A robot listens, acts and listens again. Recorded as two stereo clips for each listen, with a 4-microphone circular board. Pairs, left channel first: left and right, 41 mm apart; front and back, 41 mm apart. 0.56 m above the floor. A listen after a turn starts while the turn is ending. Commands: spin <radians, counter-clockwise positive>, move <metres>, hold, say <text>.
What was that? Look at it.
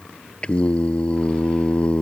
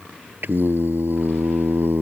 spin 2.62
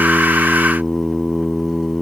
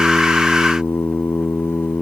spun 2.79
spin -0.17
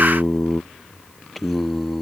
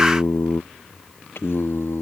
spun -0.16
say Facing the singing.